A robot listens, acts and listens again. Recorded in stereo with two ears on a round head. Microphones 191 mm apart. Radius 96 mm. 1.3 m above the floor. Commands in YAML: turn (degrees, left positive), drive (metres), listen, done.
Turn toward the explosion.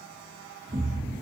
turn: -30
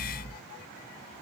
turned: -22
turn: -125
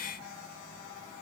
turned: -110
turn: -15
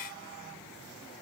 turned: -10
done: "Facing where the explosion came from. I can't hear it now."